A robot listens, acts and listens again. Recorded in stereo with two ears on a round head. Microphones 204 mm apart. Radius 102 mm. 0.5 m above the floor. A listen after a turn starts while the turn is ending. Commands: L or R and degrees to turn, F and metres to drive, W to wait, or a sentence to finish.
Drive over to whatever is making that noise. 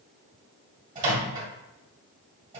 R35
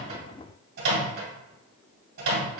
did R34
R110
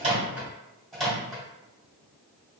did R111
F1.0
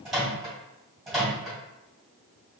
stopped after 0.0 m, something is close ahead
Blocked. The microwave is further on, straight ahead.